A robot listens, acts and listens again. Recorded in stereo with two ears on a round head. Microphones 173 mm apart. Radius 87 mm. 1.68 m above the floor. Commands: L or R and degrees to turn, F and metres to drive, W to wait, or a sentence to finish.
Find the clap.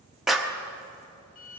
L30
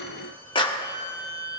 L150
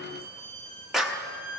Found it: a clap, straight ahead.